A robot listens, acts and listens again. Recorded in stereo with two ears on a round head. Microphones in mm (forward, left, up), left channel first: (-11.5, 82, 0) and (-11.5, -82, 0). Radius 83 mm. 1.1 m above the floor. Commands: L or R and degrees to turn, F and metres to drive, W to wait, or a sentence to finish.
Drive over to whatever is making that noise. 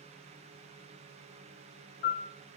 L60
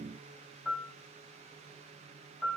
F1.0
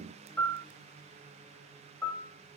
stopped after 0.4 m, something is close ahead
L10
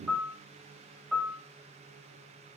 Blocked. The piano is further on, straight ahead.